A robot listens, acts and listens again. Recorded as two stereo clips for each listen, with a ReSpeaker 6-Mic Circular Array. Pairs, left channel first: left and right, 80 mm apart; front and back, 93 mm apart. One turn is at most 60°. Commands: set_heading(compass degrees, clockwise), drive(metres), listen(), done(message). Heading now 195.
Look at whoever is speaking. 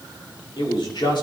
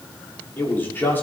set_heading(135)
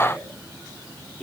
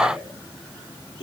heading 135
set_heading(125)
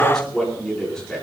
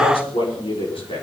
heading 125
done("Facing the man speaking, over 4 m away.")